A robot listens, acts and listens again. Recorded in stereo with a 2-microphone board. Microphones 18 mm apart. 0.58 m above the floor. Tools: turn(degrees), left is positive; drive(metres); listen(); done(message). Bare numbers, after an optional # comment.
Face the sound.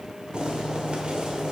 # The boiling: about 60° right or 120° right.
turn(-60)
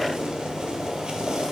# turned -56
# So it is at 55° right.
turn(-55)
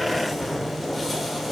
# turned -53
done("Found it: boiling, straight ahead.")